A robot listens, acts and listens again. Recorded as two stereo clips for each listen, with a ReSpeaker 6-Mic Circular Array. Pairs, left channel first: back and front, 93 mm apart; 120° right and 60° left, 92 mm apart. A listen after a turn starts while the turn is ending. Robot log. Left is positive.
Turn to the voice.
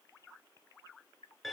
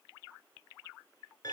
cmd idle
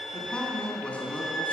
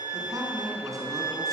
note: The man speaking: 105° left.
cmd yaw +105
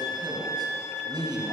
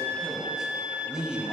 note: The man speaking is now 20° right.
cmd yaw -20
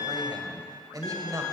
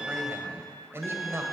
note: The man speaking is now 20° left.
cmd yaw +20
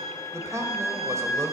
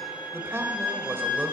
note: The man speaking is now 20° left.
cmd yaw +20
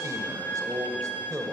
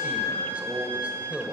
end: Found it: a man speaking, straight ahead.